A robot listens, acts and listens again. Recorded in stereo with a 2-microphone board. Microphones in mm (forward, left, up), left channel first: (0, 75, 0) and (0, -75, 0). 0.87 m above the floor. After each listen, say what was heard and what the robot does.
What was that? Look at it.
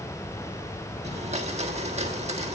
The blender: about 45° right or 135° right. Turn 45° right.
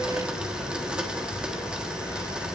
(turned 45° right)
Facing the blender, 1 to 2 m away.